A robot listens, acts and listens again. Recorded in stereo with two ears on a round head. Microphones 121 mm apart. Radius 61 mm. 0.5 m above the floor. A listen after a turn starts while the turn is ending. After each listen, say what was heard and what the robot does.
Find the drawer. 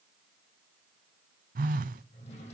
The drawer: about 45° left or 135° left. Turn 45° left.
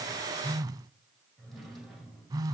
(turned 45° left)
Facing the drawer.